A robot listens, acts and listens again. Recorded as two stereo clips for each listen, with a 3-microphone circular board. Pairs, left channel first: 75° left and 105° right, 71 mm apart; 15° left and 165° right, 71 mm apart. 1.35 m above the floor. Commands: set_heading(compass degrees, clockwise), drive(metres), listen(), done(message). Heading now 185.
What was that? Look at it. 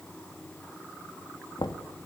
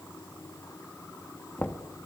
set_heading(100)
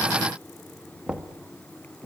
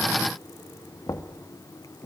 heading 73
set_heading(98)
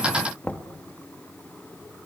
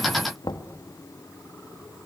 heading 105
done("Facing the knocking.")